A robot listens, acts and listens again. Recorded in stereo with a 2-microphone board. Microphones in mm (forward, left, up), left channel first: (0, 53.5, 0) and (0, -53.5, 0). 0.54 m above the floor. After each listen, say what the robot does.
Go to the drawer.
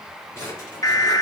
Turn 25° left.
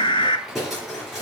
Drive 1.0 m forward.
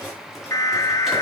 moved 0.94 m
Drive 1.0 m forward.
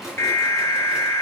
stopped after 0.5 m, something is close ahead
Something is in my way. I am facing the drawer but have not reached it.